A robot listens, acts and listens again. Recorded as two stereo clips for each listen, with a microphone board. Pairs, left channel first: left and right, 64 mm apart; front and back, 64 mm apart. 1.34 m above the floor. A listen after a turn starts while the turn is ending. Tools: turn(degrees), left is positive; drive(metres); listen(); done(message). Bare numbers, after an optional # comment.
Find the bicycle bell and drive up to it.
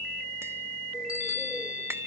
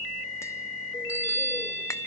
# The bicycle bell: 120° left.
turn(120)
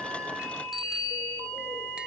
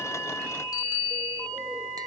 drive(1.0)
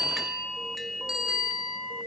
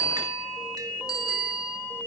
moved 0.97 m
# The bicycle bell is now 10° right.
turn(-10)
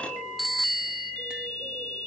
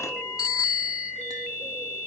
drive(1.0)
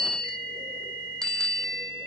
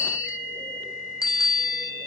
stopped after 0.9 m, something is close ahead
# The bicycle bell is now 10° left.
turn(10)
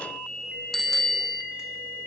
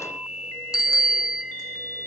done("I am next to the bicycle bell.")